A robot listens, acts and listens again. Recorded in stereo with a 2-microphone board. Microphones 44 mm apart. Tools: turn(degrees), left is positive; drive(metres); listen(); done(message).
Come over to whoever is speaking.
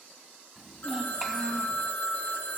turn(degrees=-30)
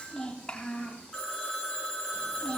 turn(degrees=25)
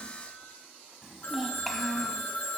drive(metres=1.0)
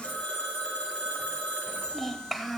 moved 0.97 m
drive(metres=1.0)
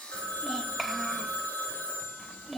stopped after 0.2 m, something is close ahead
done("Arrived at the child speaking, straight ahead.")